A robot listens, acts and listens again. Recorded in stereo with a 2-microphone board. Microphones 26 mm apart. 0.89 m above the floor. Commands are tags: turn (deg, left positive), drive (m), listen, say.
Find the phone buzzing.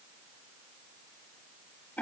<listen/>
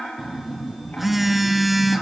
<turn deg="-30"/>
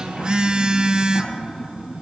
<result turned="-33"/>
<turn deg="-140"/>
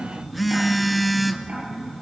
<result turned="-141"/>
<say>Found it: a phone buzzing, straight ahead.</say>